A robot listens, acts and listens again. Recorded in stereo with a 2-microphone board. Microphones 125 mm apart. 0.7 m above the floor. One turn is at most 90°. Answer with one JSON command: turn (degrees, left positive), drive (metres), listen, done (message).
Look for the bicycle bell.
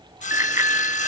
{"turn": -25}
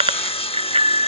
{"turn": -90}
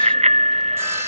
{"turn": -60}
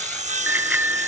{"turn": -15}
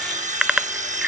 {"done": "Found it: a bicycle bell, straight ahead."}